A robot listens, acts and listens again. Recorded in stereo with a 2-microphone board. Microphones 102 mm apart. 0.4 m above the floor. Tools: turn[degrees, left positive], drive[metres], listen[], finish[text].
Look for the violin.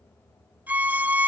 Action: turn[-30]
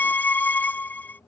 Thought: So it is at 15° left.
Action: turn[15]
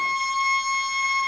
Action: finish[Found it: a violin, straight ahead.]